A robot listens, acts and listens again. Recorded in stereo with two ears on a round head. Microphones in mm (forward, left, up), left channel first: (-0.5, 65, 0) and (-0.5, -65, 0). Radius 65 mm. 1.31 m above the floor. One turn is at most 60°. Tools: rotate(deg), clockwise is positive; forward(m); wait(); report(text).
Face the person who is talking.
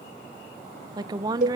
rotate(25)
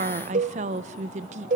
rotate(60)
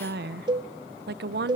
rotate(60)
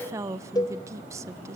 rotate(20)
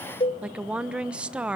rotate(10)
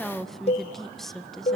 report("Found it: a woman speaking, straight ahead.")